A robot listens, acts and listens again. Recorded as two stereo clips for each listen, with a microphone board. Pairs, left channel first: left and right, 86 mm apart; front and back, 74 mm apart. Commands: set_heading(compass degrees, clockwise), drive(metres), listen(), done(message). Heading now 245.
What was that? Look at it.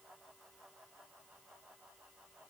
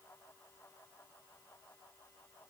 listen()
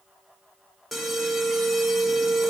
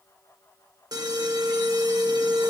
set_heading(65)
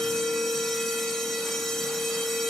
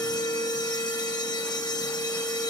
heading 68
done("Found it: an alarm, straight ahead, 1 to 2 m away.")